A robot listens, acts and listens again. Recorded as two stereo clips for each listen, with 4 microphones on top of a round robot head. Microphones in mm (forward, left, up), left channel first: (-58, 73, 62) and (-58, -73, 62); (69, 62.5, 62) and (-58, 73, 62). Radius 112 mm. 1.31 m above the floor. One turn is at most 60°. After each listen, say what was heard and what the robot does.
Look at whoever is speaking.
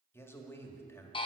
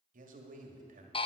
The man speaking: 165° left. Turn 60° left.
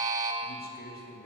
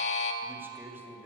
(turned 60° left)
The man speaking is now 100° left. Turn 60° left.
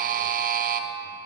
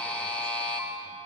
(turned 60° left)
Nothing new. It was at 40° left. Turn 40° left.
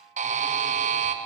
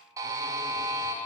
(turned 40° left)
Keep listening.
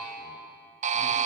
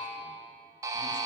Facing where the man speaking came from. I can't hear it now.